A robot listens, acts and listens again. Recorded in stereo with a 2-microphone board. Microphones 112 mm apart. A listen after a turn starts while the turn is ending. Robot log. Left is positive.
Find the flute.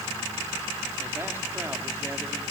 cmd idle
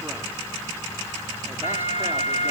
cmd yaw +90
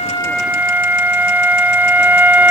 note: So it is at 15° right.
cmd yaw -15
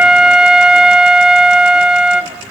end: Facing the flute.